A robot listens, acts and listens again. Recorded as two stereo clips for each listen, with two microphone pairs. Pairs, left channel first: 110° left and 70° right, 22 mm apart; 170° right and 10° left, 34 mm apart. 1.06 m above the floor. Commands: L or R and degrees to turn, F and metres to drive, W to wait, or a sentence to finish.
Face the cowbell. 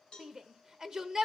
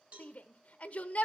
L55
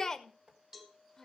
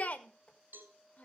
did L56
Found it: a cowbell, straight ahead, 2 to 4 m away.